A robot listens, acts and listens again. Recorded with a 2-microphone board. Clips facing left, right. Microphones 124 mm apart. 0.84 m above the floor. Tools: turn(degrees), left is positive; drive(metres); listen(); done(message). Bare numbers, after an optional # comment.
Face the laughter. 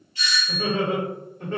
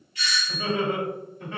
# The laughter: about 55° left or 125° left.
turn(55)
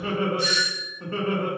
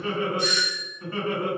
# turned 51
# So it is at 45° left.
turn(45)
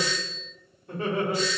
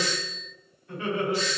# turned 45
# The laughter is now 40° left.
turn(40)
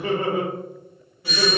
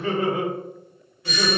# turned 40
# The laughter is now 25° left.
turn(25)
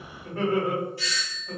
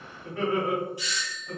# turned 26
done("Found it: laughter, straight ahead, 1 to 2 m away.")